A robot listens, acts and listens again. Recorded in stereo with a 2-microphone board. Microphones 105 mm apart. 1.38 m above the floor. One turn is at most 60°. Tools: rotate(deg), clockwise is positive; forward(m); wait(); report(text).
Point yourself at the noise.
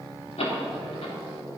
rotate(-60)
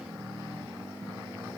rotate(-30)
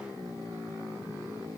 report("Facing where the door slam came from. I can't hear it now.")